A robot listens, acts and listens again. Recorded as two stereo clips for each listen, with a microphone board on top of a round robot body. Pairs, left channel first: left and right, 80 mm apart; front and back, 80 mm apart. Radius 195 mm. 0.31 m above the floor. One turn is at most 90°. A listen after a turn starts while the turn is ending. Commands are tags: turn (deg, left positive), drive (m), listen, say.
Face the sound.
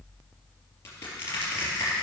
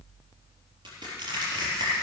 <turn deg="90"/>
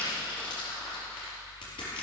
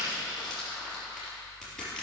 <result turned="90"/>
<turn deg="85"/>
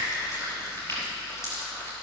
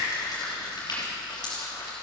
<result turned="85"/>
<turn deg="30"/>
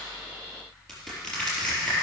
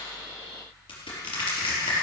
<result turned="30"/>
<say>Facing the crushing.</say>